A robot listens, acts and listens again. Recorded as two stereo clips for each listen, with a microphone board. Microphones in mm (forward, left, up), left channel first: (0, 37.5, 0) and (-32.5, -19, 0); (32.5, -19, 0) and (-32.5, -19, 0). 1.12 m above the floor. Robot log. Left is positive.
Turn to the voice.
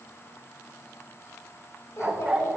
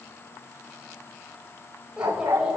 note: The child speaking: 105° left.
cmd yaw +105
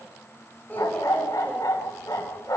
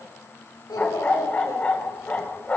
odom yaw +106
end: Facing the child speaking.